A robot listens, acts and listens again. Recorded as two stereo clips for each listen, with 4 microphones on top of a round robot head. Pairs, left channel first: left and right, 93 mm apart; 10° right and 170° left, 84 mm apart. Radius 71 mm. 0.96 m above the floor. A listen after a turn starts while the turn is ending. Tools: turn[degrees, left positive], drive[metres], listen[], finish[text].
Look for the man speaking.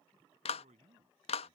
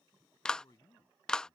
Thought: The man speaking: 70° right.
Action: turn[-70]
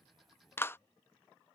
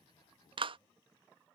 Action: listen[]
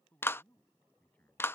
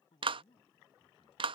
Thought: The man speaking is now 10° left.
Action: turn[10]
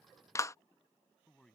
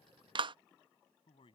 Action: finish[Facing the man speaking.]